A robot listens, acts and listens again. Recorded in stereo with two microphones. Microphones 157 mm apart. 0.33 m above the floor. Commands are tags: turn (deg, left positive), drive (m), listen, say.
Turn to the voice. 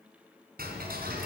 <listen/>
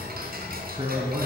<turn deg="-30"/>
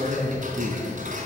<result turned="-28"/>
<turn deg="-120"/>
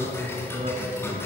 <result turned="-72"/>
<turn deg="-50"/>
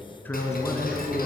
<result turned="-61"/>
<turn deg="15"/>
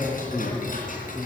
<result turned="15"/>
<say>Found it: a man speaking, straight ahead.</say>